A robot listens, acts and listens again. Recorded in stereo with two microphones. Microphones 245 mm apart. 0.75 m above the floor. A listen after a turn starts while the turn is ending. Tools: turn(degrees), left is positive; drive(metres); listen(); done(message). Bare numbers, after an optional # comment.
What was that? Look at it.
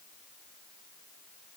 listen()
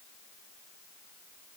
listen()
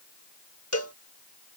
turn(90)
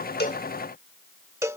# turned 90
# So it is at 10° right.
turn(-10)
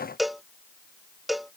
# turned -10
done("Facing the cowbell.")